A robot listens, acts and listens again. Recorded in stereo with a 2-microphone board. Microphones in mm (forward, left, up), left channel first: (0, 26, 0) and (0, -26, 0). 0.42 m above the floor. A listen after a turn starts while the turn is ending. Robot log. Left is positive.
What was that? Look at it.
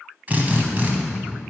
note: The drill: about 35° right or 145° right.
cmd yaw -35
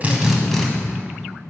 end: Found it: a drill, straight ahead.